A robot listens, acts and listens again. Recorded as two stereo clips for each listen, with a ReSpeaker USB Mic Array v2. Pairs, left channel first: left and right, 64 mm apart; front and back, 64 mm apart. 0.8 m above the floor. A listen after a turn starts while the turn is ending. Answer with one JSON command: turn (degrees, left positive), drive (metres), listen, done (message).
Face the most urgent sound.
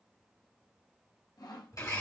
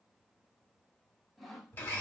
{"listen": true}
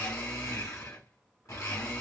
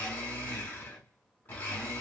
{"listen": true}
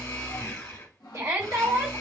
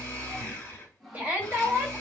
{"turn": -120}
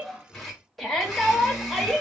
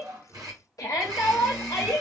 {"done": "Facing the shout, 1 to 2 m away."}